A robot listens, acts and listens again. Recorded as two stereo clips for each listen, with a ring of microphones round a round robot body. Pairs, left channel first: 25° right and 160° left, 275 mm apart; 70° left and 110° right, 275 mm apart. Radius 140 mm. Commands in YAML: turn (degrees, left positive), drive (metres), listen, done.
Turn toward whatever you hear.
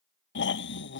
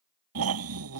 turn: -75
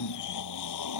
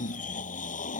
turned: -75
done: "Found it: snoring, straight ahead."